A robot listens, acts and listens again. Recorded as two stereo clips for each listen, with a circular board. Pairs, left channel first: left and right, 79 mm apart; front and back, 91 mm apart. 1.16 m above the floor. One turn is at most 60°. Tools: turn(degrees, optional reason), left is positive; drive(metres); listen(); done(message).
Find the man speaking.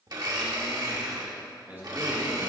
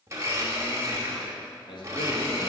turn(degrees=-25, reason="The man speaking: 25° right.")
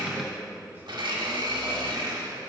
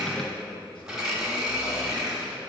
turn(degrees=-25, reason="The man speaking is now 25° right.")
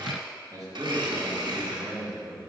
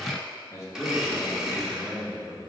turn(degrees=-60, reason="The man speaking is now 65° right.")
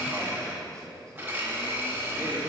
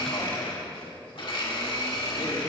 done("Facing the man speaking, 2 to 4 m away.")